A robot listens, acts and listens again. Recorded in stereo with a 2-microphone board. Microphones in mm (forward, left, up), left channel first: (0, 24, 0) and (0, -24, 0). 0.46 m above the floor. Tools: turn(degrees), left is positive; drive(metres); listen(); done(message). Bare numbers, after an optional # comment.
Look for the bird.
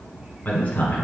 listen()
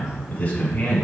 listen()
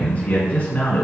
done("I can't make out a bird, only a man speaking.")